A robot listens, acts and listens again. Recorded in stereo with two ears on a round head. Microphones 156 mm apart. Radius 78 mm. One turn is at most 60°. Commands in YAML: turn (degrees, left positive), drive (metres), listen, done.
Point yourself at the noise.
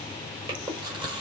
turn: -30
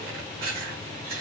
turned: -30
turn: -60
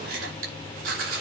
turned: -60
turn: -60
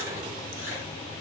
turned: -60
turn: -25
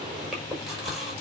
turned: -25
done: "Facing the chewing."